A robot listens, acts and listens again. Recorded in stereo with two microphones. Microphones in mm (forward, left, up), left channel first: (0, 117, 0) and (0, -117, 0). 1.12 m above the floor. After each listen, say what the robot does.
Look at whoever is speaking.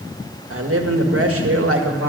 Turn 70° right.
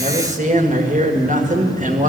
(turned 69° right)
Turn 35° right.
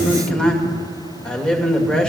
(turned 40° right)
Found it: a man speaking, straight ahead.